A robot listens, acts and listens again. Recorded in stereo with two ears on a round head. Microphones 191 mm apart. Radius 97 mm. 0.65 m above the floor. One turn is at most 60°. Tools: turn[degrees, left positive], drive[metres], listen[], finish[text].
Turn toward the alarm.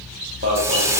Thought: The alarm: about 35° right or 145° right.
Action: turn[-35]
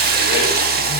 Action: listen[]
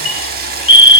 Action: finish[Facing the alarm, 1 to 2 m away.]